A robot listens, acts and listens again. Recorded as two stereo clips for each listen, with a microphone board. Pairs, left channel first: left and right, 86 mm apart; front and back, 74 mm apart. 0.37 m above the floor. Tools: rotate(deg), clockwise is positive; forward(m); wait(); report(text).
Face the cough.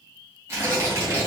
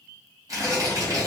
wait()
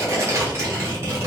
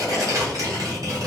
wait()
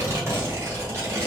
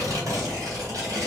report("I can't make out a cough, only tearing paper.")